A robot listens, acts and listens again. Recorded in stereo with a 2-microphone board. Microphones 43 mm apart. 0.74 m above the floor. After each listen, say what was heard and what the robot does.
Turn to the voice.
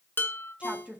The woman speaking: about 30° right or 150° right. Turn 30° right.
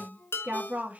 The woman speaking: about 40° right or 140° right. Turn 40° right.
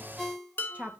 The woman speaking: about 35° right or 145° right. Turn 35° right.
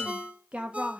The woman speaking: about 25° right or 155° right. Turn 25° right.
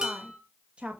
The woman speaking: about 30° right or 150° right. Turn 30° right.
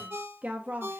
The woman speaking: about 40° right or 140° right. Turn 40° right.
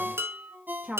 The woman speaking: about 35° right or 145° right. Turn 35° right.
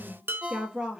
So it is at 20° right. Turn 20° right.
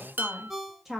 The woman speaking is now 10° right. Turn 10° right.
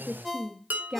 Found it: a woman speaking, straight ahead.